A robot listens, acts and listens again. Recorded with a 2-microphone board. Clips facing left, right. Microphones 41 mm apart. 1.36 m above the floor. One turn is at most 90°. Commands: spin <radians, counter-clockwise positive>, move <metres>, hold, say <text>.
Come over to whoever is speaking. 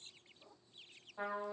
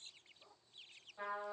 hold
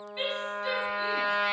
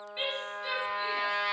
spin -0.52
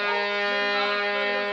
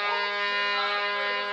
hold
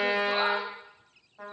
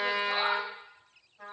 hold
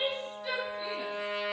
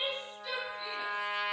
move 1.0
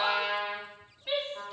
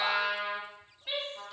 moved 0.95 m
move 1.0
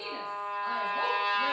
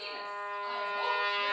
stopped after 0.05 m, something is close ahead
hold
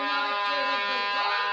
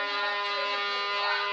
hold
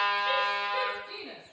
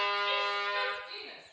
say Arrived at the woman speaking, straight ahead.